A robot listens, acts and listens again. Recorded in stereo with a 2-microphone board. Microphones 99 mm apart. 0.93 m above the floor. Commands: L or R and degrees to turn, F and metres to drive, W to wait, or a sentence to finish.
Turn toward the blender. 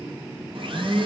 R60
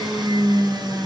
R50
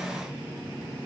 W
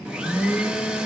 R10
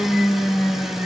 Facing the blender.